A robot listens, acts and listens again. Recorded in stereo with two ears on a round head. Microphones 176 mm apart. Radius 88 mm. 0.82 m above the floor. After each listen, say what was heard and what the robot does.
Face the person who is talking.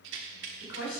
The woman speaking: about 60° left or 120° left. Turn 60° left.
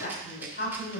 So it is at 60° left. Turn 60° left.
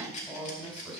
The woman speaking is now 10° left. Turn 10° left.
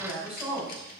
Found it: a woman speaking, straight ahead, 2 to 4 m away.